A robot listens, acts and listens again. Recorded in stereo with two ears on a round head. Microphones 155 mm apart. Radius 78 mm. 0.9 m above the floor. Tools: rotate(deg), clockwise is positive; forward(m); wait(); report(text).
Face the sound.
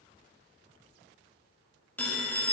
rotate(-30)
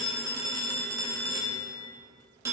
rotate(15)
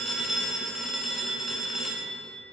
report("Facing the phone ringing.")